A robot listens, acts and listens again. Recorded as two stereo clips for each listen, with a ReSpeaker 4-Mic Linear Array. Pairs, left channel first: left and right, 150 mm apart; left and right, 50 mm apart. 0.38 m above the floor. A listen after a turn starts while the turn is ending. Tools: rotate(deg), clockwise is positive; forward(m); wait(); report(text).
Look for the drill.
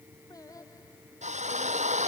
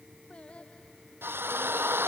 rotate(55)
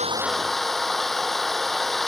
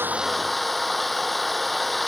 report("Found it: a drill, straight ahead.")